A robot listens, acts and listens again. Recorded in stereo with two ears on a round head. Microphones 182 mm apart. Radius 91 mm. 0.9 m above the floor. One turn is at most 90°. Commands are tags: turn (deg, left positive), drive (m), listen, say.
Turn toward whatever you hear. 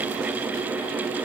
<listen/>
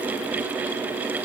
<listen/>
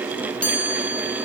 <turn deg="30"/>
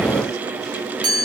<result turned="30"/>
<turn deg="-25"/>
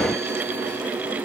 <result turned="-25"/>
<listen/>
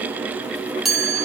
<say>Facing the chime, 2 to 4 m away.</say>